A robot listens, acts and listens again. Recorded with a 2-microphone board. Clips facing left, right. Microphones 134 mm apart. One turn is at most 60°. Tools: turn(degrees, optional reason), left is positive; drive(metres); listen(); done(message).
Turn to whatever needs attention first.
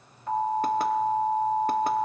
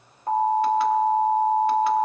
turn(degrees=-45, reason="The alarm: about 45° right or 135° right.")
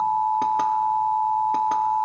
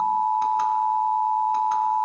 done("Found it: an alarm, straight ahead.")